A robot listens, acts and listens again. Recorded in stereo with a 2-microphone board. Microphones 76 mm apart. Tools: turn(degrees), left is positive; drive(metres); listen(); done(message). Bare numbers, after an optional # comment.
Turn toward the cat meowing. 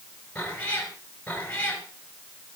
# The cat meowing: about 15° left or 165° left.
turn(15)
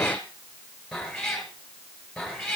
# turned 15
turn(30)
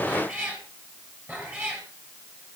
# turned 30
# So it is at 25° right.
turn(-25)
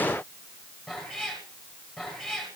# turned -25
done("Found it: a cat meowing, straight ahead, over 4 m away.")